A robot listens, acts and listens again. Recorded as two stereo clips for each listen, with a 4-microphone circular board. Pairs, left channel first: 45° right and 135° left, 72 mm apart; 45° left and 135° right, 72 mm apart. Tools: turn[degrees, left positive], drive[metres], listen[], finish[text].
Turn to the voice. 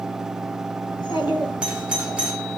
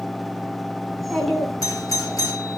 Thought: The child speaking: 45° right.
Action: turn[-45]
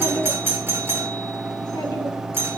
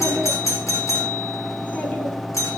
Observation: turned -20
Thought: Nothing new. It was at 25° right.
Action: turn[-25]
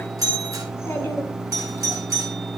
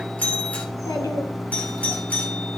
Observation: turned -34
Thought: The child speaking is now 10° left.
Action: turn[10]
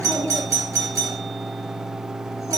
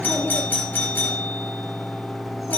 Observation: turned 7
Action: listen[]
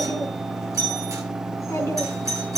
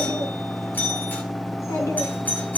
Action: finish[Found it: a child speaking, straight ahead.]